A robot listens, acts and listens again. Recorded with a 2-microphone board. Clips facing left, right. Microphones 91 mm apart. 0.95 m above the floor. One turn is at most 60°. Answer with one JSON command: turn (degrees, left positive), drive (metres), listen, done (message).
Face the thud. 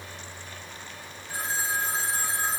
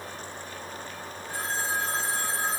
{"listen": true}
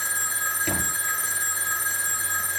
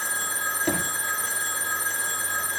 {"turn": -30}
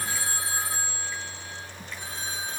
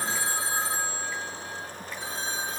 {"listen": true}
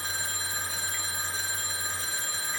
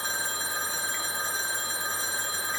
{"done": "I heard a thud, but can't make it out now. It was about straight ahead or 120° right."}